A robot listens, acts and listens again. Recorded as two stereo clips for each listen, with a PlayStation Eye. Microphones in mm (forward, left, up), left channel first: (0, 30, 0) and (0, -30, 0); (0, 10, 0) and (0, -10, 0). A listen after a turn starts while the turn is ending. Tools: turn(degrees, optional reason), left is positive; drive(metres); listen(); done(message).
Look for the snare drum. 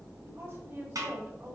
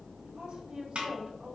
turn(degrees=-75, reason="The snare drum: about 75° right or 105° right.")
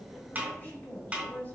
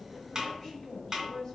turn(degrees=-20, reason="So it is at 20° right.")
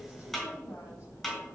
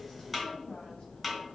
done("Facing the snare drum, 2 to 4 m away.")